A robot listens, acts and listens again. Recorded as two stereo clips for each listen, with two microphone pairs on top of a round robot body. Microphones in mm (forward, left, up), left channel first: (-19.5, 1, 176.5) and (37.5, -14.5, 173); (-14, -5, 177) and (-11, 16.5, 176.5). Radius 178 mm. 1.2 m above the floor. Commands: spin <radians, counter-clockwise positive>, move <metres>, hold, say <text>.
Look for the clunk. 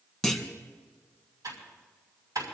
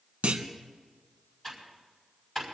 spin 1.40
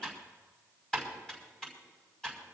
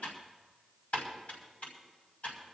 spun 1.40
say Facing where the clunk came from. I can't hear it now.